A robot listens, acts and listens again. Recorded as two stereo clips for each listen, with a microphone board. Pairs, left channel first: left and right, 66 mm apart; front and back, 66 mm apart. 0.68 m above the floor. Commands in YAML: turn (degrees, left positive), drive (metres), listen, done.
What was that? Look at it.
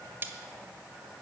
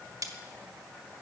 turn: -145
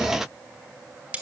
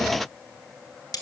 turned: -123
turn: -20
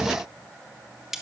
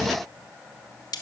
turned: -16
done: "Found it: cutlery clinking, straight ahead, 1 to 2 m away."